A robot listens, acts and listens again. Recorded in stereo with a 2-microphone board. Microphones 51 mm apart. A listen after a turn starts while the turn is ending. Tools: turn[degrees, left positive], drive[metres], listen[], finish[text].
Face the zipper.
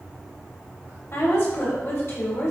Action: listen[]
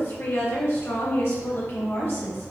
Action: listen[]
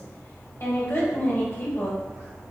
Action: finish[I can't make out a zipper, only a woman speaking.]